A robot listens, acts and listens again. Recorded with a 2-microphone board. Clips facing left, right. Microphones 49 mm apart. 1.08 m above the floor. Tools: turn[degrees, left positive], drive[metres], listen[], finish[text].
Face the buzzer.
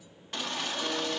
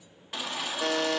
Thought: The buzzer: about 65° right or 115° right.
Action: turn[-65]
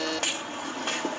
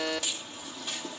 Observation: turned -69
Thought: So it is at 10° right.
Action: turn[-10]
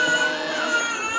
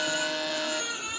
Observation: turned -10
Action: finish[Facing the buzzer.]